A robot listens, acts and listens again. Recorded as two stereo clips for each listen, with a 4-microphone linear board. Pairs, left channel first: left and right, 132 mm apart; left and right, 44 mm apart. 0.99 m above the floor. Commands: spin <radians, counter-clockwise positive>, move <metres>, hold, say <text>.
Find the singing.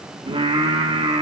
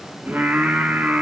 spin -0.70
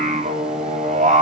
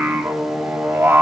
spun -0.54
spin -1.92
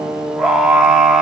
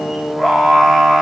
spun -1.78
say Facing the singing.